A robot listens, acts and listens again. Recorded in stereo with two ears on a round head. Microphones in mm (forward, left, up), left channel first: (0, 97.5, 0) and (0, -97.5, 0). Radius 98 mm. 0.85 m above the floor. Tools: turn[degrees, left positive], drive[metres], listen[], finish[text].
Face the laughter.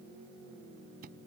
Action: listen[]
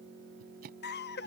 Thought: The laughter: about 50° left or 130° left.
Action: turn[50]
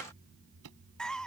Action: finish[Found it: laughter, straight ahead.]